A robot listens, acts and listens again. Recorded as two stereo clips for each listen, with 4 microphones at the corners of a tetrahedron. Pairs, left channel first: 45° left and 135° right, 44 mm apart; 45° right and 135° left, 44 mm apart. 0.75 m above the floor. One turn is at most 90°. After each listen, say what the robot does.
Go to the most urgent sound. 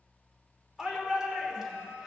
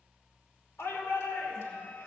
Turn 55° right.
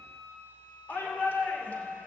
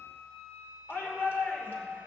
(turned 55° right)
Drive 1.0 m forward.
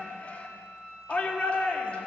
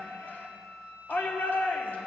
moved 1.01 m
Turn 10° right.
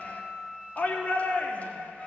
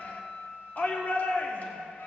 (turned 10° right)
Drive 1.0 m forward.
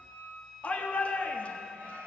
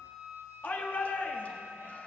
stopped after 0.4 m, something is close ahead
Arrived at the shout, straight ahead.